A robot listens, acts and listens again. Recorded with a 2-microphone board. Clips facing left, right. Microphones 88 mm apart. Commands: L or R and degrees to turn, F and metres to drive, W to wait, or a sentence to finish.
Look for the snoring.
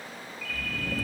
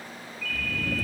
R25
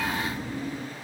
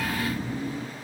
Facing the snoring, 1 to 2 m away.